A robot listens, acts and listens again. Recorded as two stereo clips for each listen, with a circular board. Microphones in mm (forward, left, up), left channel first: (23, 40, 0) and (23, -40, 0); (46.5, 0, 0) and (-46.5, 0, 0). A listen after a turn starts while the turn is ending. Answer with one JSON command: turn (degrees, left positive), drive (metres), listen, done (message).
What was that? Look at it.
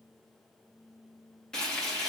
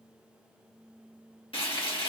{"turn": 10}
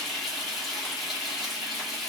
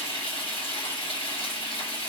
{"done": "Facing the frying."}